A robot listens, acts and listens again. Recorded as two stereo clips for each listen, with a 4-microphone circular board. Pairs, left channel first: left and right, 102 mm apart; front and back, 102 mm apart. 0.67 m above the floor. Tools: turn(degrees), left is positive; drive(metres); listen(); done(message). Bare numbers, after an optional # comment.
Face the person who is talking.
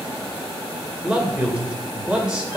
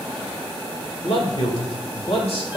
# The man speaking: 10° right.
turn(-10)
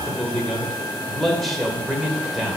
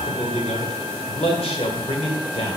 done("Facing the man speaking.")